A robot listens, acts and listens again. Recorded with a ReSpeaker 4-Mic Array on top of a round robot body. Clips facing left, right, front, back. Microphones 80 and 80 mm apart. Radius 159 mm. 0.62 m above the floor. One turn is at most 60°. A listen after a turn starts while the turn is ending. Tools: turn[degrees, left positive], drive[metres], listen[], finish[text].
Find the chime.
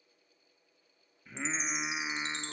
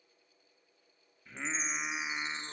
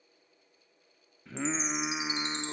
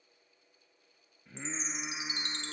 Thought: The chime: 70° left.
Action: turn[60]
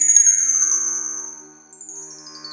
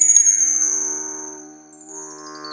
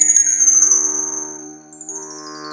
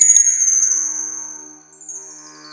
Thought: The chime is now 20° left.
Action: turn[20]
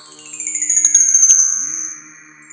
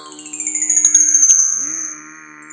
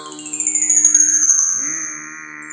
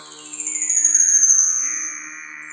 Action: finish[Facing the chime, 1 to 2 m away.]